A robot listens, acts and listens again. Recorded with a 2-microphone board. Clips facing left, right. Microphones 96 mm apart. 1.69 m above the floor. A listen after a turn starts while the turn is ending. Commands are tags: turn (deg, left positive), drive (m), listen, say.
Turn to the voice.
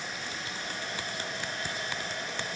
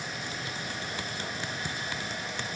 <listen/>
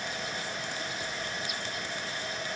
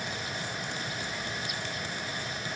<listen/>
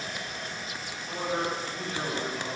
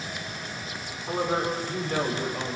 <turn deg="-45"/>
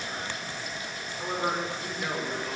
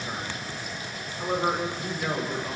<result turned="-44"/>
<say>Found it: a man speaking, straight ahead, over 4 m away.</say>